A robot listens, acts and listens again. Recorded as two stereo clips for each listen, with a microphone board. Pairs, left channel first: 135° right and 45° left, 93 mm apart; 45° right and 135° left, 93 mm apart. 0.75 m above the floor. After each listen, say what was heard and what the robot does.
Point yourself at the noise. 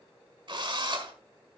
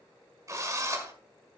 The drill: 80° left. Turn 80° left.
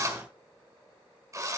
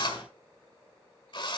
The drill is now 10° right. Turn 10° right.
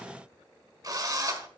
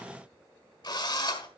Facing the drill.